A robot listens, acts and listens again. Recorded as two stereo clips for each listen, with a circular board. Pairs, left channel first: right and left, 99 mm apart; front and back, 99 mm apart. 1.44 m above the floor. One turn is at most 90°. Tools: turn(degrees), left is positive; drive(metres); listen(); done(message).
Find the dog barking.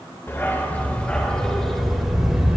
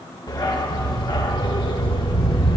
turn(degrees=10)
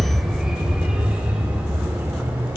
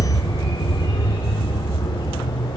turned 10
turn(degrees=25)
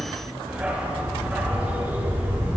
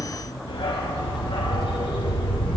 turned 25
turn(degrees=20)
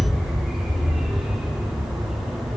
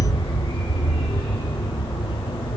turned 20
done("Found it: a dog barking, straight ahead.")